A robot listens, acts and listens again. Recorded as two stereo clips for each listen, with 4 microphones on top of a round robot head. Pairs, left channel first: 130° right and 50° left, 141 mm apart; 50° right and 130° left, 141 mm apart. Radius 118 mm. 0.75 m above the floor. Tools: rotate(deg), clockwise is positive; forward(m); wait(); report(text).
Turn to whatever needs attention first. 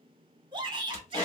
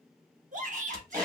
rotate(-105)
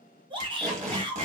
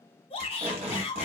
report("Facing the shout, 1 to 2 m away.")